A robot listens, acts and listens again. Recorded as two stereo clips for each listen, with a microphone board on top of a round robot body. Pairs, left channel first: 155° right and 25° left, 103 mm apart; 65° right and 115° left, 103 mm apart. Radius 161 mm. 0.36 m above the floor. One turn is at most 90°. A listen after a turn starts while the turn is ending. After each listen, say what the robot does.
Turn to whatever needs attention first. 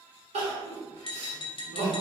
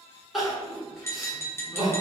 Turn 25° left.
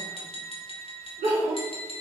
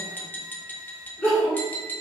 Turn 15° left.
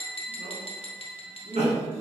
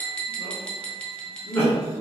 Facing the crying, 1 to 2 m away.